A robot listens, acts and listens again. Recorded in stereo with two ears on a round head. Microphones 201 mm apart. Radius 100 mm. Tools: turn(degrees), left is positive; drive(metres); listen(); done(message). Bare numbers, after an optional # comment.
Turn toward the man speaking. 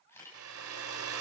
listen()
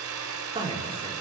# The man speaking: about 25° right or 155° right.
turn(-25)
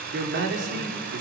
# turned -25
# So it is at 125° right.
turn(-125)
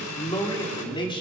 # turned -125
# The man speaking is now 25° left.
turn(25)
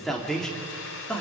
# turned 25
done("Facing the man speaking, 2 to 4 m away.")